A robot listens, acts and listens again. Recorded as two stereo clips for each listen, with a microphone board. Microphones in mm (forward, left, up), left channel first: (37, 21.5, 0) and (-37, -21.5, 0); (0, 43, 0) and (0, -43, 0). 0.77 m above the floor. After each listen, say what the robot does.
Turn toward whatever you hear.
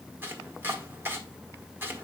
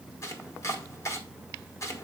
Turn 145° left.
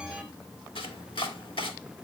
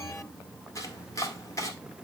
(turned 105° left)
Turn 40° left.
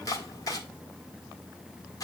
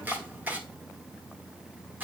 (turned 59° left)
Turn 20° right.
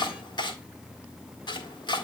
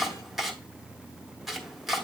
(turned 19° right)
Found it: chopping, straight ahead, 1 to 2 m away.